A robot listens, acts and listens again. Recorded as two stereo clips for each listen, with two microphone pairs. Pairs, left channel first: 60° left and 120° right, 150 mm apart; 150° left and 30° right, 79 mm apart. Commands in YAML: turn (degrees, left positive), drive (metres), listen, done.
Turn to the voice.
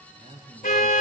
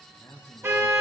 turn: -160
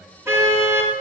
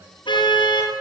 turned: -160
listen: true
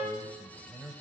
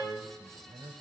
turn: -40
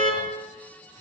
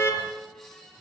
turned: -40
listen: true
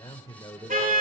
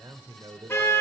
done: "Facing the man speaking."